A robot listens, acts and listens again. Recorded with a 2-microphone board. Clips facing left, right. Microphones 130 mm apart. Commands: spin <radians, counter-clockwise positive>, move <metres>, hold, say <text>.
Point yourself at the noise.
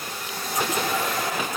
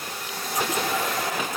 hold
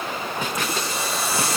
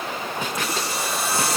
spin -1.05
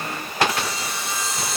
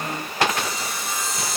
spin -0.96
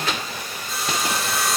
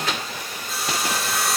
say Facing the sawing.